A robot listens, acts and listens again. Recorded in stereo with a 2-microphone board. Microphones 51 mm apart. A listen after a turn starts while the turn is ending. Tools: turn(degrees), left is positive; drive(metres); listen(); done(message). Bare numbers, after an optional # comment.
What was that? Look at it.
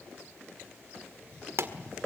# The pop: about 65° right or 115° right.
turn(-65)
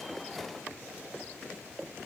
listen()
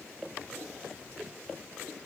done("I heard a pop, but can't make it out now. It was about straight ahead or 50° right.")